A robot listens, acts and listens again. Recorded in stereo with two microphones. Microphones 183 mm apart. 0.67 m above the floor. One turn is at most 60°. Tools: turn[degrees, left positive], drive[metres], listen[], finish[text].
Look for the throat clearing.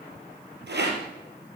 Action: listen[]
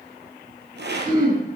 Thought: The throat clearing: about 25° right or 155° right.
Action: turn[-25]
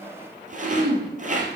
Thought: So it is at 130° right.
Action: turn[-60]
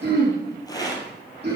Thought: The throat clearing is now 65° right.
Action: turn[-60]
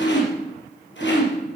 Action: finish[Found it: throat clearing, straight ahead.]